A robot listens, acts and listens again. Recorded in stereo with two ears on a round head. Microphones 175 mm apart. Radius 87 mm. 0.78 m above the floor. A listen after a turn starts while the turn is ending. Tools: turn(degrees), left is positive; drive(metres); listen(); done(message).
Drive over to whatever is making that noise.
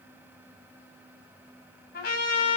turn(degrees=55)
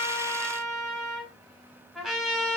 drive(metres=1.0)
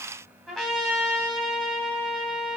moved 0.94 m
drive(metres=1.0)
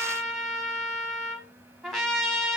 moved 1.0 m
drive(metres=1.0)
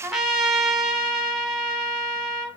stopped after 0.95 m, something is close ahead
done("Arrived at the trumpet, straight ahead.")